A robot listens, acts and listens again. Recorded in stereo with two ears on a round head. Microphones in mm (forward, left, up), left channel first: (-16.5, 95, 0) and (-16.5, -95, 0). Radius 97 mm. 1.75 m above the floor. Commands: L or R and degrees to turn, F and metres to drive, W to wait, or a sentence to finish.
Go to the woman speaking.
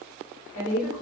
L60
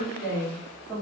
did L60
F1.0
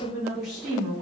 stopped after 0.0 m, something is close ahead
Blocked. The woman speaking is further on, straight ahead.